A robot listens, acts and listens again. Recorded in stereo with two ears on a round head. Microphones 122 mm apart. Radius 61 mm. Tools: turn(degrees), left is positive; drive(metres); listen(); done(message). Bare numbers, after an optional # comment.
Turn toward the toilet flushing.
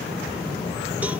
listen()
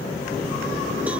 listen()
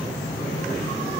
done("I can't make out a toilet flushing to turn to.")